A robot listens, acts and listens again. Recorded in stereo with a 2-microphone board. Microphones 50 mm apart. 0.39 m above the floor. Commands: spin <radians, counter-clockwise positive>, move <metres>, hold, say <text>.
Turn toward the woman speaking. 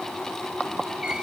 hold
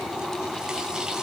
hold
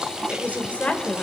spin 0.44
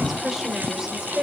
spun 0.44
spin -0.26
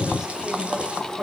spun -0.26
spin -0.35
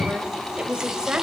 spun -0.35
spin -0.26
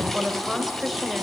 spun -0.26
say Facing the woman speaking.